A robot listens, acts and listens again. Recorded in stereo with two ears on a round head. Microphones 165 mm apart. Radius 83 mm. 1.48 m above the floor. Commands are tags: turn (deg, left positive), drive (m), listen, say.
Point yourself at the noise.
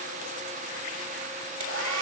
<turn deg="-90"/>
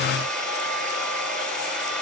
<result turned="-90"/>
<say>Found it: a hair dryer, straight ahead, over 4 m away.</say>